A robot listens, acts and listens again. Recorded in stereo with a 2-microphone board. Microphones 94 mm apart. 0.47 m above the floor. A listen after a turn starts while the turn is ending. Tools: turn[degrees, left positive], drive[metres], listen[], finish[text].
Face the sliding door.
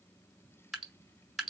Action: listen[]
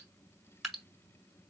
Action: listen[]
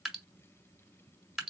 Action: finish[I can't make out a sliding door, only dripping.]